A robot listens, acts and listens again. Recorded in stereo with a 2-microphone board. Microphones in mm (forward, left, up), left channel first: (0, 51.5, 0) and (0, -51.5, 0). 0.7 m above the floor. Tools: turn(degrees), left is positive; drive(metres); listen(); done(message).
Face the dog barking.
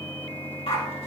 turn(degrees=70)
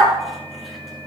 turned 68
done("Found it: a dog barking, straight ahead.")